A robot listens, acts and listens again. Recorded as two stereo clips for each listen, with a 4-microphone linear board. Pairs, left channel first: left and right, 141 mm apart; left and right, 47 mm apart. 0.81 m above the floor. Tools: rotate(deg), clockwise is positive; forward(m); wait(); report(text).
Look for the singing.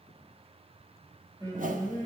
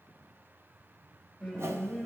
rotate(25)
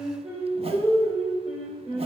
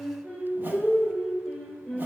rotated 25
report("Facing the singing, 2 to 4 m away.")